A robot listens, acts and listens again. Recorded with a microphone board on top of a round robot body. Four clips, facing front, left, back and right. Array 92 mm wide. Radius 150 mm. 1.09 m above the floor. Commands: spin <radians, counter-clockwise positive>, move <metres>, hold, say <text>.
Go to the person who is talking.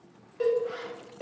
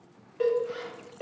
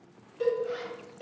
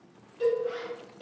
hold
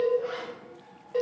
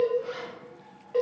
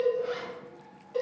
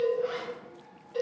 hold
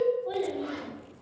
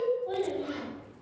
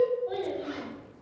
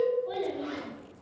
move 1.0
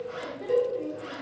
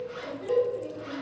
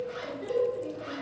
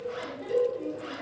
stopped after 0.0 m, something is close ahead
say Blocked. The child speaking is further on, straight ahead.